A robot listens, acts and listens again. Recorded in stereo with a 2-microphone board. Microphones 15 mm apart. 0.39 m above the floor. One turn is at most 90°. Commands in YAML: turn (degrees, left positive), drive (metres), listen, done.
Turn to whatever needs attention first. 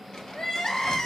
turn: 65
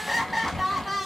done: "Found it: crying, straight ahead, under 1 m away."